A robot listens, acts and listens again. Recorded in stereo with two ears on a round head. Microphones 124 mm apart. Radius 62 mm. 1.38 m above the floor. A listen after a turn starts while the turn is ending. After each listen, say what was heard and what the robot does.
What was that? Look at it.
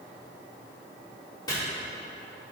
The chopping: about 25° left or 155° left. Turn 25° left.
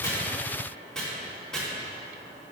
Facing the chopping, 2 to 4 m away.